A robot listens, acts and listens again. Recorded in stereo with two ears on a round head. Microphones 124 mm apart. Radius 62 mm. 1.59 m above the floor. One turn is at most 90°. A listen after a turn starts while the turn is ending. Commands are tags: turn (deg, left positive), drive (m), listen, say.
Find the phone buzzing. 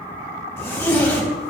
<listen/>
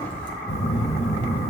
<turn deg="50"/>
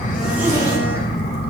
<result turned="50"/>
<turn deg="80"/>
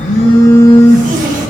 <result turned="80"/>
<turn deg="20"/>
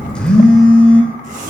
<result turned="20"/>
<say>Facing the phone buzzing, 1 to 2 m away.</say>